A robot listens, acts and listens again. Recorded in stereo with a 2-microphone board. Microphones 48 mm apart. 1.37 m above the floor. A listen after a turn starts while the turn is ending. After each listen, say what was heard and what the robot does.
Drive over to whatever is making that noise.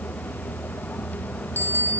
The bicycle bell: about 55° right or 125° right. Turn 55° right.
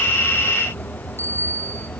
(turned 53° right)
So it is at 70° right. Turn 70° right.
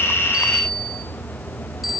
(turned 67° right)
Drive 1.0 m forward.
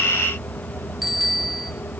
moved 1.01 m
Drive 1.0 m forward.
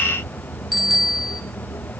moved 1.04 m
Drive 1.0 m forward.
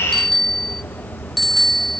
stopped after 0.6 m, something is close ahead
I am next to the bicycle bell.